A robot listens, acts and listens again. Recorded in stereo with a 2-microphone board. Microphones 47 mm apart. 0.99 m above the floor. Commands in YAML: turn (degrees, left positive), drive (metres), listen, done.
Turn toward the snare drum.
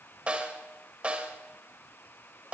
turn: -25
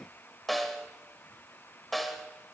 done: "Found it: a snare drum, straight ahead."